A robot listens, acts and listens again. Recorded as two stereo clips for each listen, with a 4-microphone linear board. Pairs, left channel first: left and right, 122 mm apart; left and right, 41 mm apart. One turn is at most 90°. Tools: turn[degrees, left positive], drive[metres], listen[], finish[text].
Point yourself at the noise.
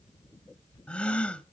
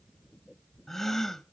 Action: turn[30]
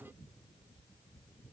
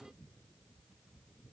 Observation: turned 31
Action: listen[]
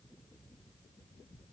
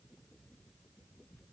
Action: finish[I heard a gasp, but can't make it out now. It was about 20° right or 140° left.]